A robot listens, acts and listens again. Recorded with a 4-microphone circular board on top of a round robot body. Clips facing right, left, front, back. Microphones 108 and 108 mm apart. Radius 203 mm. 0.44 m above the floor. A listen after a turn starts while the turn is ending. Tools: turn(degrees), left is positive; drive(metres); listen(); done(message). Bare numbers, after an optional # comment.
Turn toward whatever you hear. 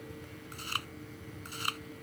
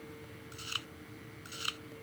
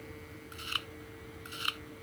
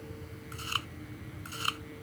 # The chewing: 130° right.
turn(-130)
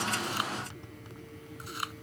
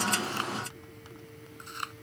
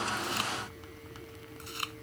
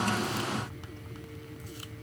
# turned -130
done("Found it: chewing, straight ahead.")